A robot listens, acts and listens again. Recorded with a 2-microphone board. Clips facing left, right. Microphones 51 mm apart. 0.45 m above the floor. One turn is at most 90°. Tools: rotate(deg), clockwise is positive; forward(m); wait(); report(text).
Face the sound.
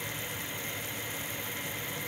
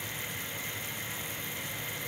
wait()
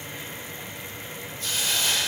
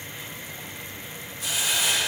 rotate(30)
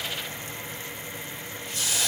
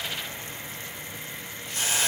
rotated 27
rotate(90)
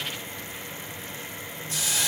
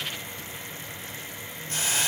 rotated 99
rotate(45)
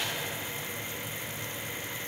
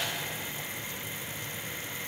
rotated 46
wait()
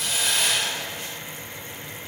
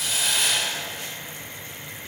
report("Found it: a hiss, straight ahead.")